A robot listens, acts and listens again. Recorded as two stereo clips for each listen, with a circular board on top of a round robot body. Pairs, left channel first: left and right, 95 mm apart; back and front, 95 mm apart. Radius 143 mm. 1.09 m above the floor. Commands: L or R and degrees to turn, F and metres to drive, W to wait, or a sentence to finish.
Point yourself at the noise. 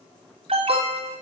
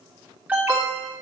R75
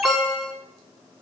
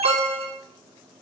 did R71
Facing the alarm, 2 to 4 m away.